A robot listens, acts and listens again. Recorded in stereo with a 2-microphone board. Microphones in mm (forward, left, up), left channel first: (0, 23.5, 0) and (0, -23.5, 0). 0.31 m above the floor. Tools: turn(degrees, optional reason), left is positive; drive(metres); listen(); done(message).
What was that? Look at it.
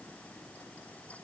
listen()
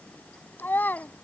turn(degrees=45, reason="The child speaking: about 45° left or 135° left.")
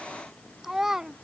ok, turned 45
turn(degrees=-10, reason="So it is at 10° right.")
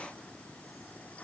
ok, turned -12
listen()
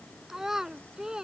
turn(degrees=-15, reason="The child speaking is now 15° right.")
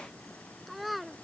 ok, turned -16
done("Found it: a child speaking, straight ahead.")